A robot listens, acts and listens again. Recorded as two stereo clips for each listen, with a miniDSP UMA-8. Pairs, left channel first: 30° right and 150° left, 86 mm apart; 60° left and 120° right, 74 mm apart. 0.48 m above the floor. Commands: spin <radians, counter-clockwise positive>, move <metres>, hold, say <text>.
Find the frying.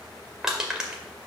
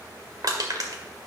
hold
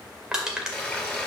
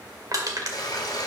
spin 0.79
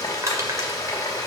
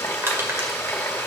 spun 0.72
say Facing the frying.